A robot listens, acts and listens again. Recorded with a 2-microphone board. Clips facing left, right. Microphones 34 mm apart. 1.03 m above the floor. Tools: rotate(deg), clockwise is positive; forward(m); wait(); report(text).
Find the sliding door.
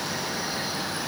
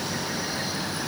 wait()
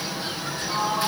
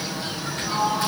rotate(60)
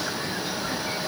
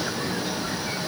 wait()
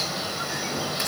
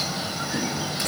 wait()
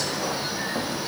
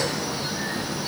report("I heard a sliding door, but can't make it out now. It was about straight ahead or 60° right.")